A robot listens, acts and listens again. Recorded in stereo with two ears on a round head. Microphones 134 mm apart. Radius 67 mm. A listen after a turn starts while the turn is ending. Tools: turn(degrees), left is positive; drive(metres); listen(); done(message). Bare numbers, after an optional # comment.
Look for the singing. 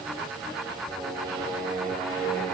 turn(30)
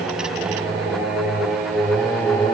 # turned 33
turn(30)
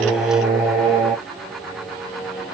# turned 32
turn(30)
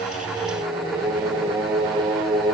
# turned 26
turn(-30)
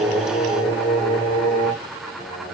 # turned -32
# So it is at 15° left.
turn(15)
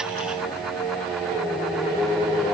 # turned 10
done("Found it: singing, straight ahead, 1 to 2 m away.")